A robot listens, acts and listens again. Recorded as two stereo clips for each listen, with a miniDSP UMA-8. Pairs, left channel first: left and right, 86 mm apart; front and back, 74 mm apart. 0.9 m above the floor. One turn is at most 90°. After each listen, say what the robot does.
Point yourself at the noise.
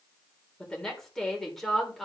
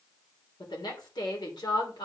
Facing the woman speaking, 2 to 4 m away.